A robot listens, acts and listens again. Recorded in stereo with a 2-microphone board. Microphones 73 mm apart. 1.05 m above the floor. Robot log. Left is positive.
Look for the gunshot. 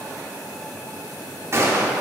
note: The gunshot: about 40° right or 140° right.
cmd yaw -40
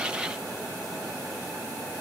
cmd idle
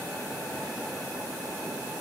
end: I heard a gunshot, but can't make it out now. It was about straight ahead or 100° right.